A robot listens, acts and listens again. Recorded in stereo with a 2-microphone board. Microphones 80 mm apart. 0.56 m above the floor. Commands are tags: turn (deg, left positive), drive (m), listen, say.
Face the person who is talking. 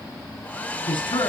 <turn deg="90"/>
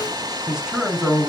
<say>Found it: a man speaking, straight ahead.</say>